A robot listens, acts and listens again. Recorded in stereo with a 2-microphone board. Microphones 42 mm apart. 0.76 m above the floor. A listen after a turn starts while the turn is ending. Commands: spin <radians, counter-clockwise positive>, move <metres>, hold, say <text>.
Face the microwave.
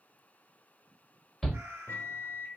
spin 1.05
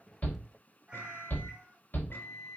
spin 0.96
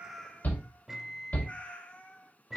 say Found it: a microwave, straight ahead.